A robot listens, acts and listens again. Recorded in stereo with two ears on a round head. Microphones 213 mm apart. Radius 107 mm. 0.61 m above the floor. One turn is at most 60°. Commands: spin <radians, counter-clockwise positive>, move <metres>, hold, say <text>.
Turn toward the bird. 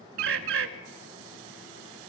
spin -0.96
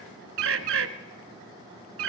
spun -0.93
spin -1.05
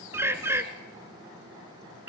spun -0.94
spin -0.17
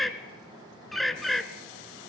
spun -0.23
say Found it: a bird, straight ahead.